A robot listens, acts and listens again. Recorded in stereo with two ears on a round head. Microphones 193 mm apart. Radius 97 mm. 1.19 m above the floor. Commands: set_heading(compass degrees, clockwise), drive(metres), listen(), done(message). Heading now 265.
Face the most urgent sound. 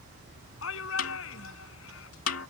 set_heading(195)
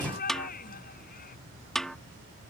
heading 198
set_heading(158)
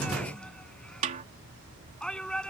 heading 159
done("Facing the shout.")